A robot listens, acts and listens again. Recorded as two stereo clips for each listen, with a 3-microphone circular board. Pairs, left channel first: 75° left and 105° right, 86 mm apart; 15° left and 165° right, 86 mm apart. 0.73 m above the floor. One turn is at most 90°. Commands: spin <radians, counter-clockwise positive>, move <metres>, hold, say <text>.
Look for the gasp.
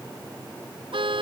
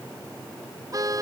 hold
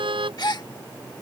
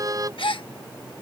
spin 0.61
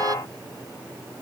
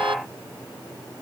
say Facing where the gasp came from. I can't hear it now.